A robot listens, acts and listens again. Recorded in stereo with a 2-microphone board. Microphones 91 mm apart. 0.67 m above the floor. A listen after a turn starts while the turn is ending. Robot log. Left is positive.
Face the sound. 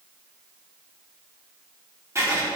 note: The writing: about 30° right or 150° right.
cmd yaw -30
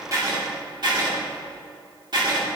note: So it is at 115° right.
cmd yaw -115
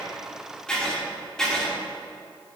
note: The writing is now 10° left.
cmd yaw +10
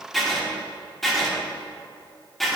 end: Found it: writing, straight ahead.